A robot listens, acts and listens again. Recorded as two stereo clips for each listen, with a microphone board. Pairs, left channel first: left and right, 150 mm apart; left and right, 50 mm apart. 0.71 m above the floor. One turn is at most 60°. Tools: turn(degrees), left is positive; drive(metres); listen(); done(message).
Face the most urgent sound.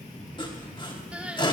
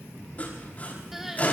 turn(degrees=-30)
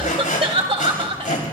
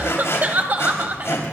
turn(degrees=-60)
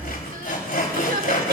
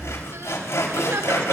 turn(degrees=-60)
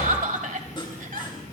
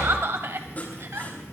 turn(degrees=-60)
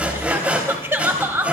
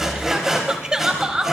turn(degrees=-15)
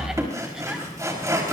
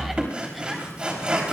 listen()
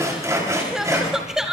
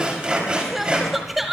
done("Facing the crying.")